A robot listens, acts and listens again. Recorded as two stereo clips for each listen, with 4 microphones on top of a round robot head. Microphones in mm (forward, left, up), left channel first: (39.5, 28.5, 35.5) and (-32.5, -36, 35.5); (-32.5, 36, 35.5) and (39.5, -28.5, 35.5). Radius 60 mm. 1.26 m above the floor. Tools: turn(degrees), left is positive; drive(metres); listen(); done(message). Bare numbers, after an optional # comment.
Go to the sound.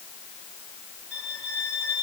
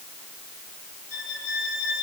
# The violin: 150° left.
turn(150)
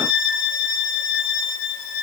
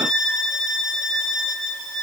# The violin is now 55° left.
turn(55)
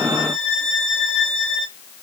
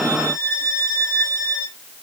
drive(1.0)
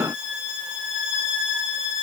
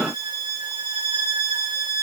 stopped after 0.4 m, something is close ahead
done("Something is in my way. I am facing the violin but have not reached it.")